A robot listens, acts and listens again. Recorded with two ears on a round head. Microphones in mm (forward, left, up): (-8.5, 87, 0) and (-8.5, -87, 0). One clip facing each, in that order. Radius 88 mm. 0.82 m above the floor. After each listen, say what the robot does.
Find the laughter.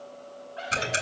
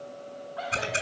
Turn 30° left.
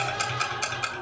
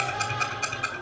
Turn 120° left.
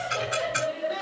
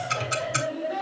Turn 20° left.
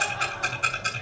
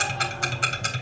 Keep listening.
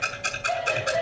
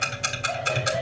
Facing the laughter.